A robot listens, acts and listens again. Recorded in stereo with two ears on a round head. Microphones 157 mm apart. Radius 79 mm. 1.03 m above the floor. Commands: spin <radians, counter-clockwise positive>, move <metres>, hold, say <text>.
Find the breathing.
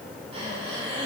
spin -0.61
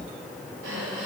spin -1.92
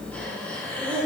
spin 0.17
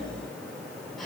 hold
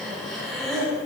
say Found it: breathing, straight ahead.